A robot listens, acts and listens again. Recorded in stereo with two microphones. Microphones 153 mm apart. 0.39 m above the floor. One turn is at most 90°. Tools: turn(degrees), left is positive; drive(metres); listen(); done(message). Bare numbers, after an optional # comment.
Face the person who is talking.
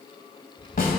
# The child speaking: about 35° left or 145° left.
turn(35)
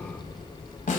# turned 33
done("Facing the child speaking, 1 to 2 m away.")